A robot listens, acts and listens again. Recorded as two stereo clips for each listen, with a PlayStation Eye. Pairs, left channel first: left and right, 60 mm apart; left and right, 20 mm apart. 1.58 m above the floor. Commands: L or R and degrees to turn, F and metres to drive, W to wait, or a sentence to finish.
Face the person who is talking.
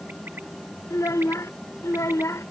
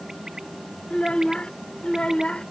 L55
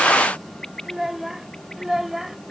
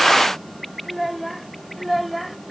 Found it: a child speaking, straight ahead.